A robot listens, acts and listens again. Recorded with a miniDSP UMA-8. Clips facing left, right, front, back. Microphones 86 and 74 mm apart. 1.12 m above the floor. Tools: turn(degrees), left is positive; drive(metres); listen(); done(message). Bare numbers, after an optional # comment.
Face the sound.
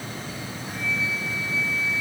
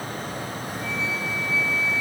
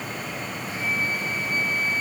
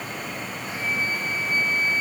# The flute: 120° left.
turn(120)
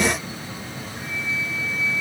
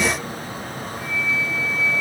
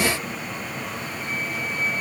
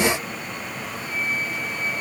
# The flute is now 25° left.
turn(25)
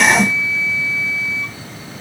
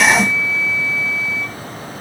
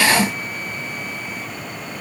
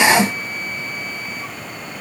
done("Facing the flute, 2 to 4 m away.")